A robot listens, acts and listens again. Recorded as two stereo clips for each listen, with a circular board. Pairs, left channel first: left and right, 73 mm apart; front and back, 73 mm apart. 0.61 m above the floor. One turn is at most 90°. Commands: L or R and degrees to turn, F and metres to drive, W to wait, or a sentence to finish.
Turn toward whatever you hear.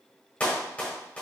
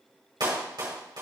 L90
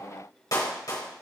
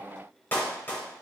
L60
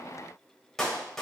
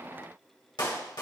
Found it: a clap, straight ahead, 2 to 4 m away.